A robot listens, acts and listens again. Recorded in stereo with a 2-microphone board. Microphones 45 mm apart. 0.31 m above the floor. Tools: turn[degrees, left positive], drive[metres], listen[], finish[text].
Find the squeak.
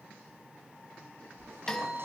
Thought: The squeak: about 60° right or 120° right.
Action: turn[-60]
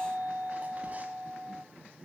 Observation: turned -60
Action: listen[]
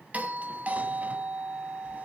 Action: listen[]
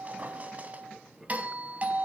Thought: So it is at 40° right.
Action: turn[-40]
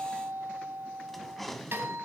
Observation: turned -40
Action: finish[Found it: a squeak, straight ahead, 2 to 4 m away.]